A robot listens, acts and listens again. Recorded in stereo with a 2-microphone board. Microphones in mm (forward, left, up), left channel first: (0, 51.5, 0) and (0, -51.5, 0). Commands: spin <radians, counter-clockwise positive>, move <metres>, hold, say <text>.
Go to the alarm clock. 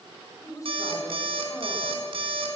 spin -1.05
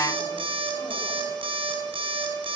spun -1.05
spin -1.05
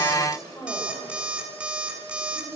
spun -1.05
spin -0.17
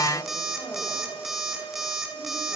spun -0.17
move 1.0
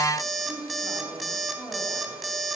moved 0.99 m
move 1.0
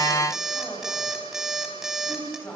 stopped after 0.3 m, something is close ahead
say Something is in my way. I am facing the alarm clock but have not reached it.